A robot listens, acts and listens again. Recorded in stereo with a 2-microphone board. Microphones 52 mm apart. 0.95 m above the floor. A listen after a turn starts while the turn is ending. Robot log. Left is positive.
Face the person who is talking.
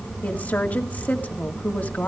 note: The woman speaking: about 35° left or 145° left.
cmd yaw +35
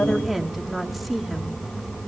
end: Facing the woman speaking.